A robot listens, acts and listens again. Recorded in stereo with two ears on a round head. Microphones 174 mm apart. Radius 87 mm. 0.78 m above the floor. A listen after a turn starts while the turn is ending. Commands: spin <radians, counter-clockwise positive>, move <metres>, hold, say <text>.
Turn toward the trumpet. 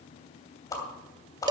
hold
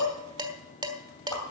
hold
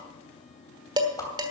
say I can't make out a trumpet, only dishes clattering and a whoosh.